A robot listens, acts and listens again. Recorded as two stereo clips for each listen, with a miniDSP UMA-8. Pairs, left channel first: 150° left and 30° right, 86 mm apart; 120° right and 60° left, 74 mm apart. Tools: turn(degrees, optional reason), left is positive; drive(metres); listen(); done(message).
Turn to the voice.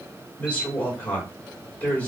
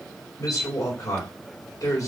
turn(degrees=-140, reason="The woman speaking: 140° right.")
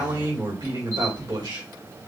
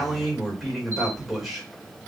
turn(degrees=-25, reason="The woman speaking is now 25° right.")
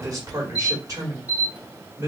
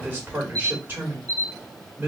done("Found it: a woman speaking, straight ahead.")